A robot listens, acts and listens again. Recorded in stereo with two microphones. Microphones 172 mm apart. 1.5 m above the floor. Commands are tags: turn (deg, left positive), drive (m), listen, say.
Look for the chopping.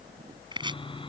<turn deg="-25"/>
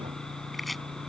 <listen/>
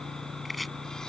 <listen/>
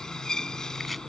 <say>I heard chopping, but can't make it out now. It was about straight ahead or 130° right.</say>